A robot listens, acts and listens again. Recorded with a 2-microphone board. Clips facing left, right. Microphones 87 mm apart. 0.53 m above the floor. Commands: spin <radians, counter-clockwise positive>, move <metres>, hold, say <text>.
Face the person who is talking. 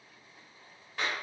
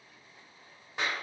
hold
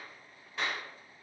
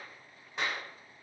hold
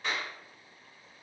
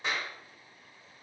say I can't make out anyone speaking, only a clap.